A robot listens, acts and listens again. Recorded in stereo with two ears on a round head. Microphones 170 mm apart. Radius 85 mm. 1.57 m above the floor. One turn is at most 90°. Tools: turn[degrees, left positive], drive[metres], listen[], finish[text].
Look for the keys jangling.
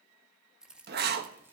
Action: turn[-30]
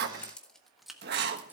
Action: turn[-30]
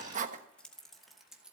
Action: turn[-30]
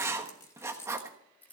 Thought: So it is at 10° left.
Action: turn[10]
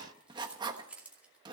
Action: finish[Found it: keys jangling, straight ahead.]